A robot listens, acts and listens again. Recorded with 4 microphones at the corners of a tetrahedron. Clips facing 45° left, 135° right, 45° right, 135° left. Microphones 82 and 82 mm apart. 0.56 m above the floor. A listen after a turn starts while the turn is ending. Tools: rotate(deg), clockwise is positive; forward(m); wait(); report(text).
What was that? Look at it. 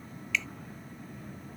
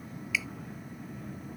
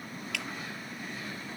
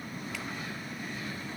rotate(55)
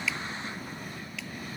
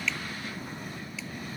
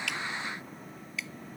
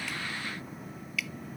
rotate(-15)
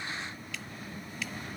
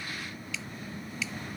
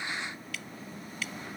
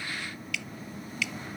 report("Found it: dripping, straight ahead.")